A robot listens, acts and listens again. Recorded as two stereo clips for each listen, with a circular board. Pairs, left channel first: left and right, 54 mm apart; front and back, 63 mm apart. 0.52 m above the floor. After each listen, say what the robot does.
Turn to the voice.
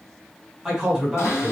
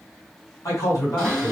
Turn 10° right.
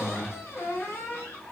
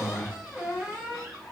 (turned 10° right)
Found it: a man speaking, straight ahead.